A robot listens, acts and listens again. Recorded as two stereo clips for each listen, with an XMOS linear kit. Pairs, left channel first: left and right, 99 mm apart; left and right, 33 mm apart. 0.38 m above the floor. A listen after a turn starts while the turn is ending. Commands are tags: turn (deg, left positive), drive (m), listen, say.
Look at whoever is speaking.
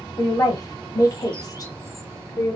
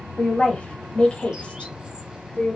<turn deg="40"/>
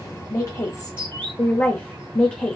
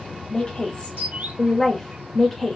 <turn deg="10"/>
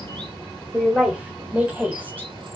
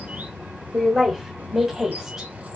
<turn deg="-15"/>
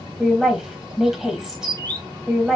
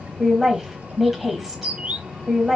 <say>Facing the woman speaking, 1 to 2 m away.</say>